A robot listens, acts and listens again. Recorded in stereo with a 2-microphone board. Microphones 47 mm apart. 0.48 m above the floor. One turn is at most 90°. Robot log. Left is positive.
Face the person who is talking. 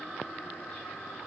cmd idle
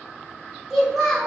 cmd yaw -30
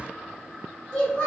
note: So it is at 25° left.
cmd yaw +25
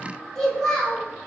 end: Facing the child speaking.